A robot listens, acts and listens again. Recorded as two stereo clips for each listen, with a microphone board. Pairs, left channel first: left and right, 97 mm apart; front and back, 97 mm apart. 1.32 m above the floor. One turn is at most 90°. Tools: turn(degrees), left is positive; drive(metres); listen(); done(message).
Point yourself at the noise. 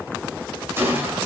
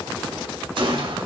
turn(degrees=-90)
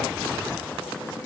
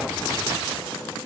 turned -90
turn(degrees=-65)
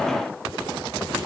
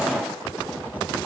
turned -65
done("I heard a gunshot from this way, but can't make it out now.")